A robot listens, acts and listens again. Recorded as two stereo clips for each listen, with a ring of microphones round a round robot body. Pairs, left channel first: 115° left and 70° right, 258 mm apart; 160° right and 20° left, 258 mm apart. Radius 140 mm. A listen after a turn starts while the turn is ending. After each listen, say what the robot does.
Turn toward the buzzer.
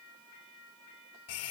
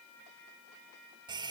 Keep listening.
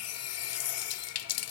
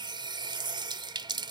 Keep listening.
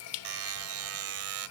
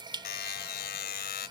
Turn 105° right.
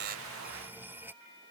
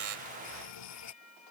Keep listening.
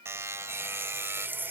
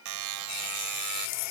Turn 15° left.
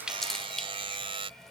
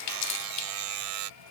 Facing the buzzer.